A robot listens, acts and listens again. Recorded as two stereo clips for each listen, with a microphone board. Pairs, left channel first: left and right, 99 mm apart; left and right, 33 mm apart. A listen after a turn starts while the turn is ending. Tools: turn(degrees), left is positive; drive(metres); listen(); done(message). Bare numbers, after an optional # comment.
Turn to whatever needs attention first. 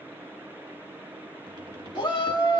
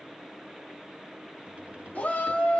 # The shout: about 55° left or 125° left.
turn(55)
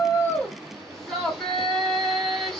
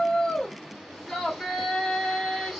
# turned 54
done("Found it: a shout, straight ahead.")